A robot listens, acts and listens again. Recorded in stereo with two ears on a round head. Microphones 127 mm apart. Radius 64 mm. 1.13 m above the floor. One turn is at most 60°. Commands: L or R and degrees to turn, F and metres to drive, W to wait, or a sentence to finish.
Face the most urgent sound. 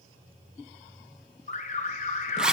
L55
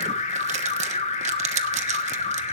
L55
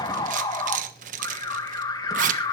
L30
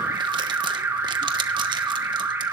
R20
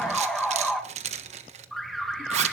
Found it: an alarm, straight ahead.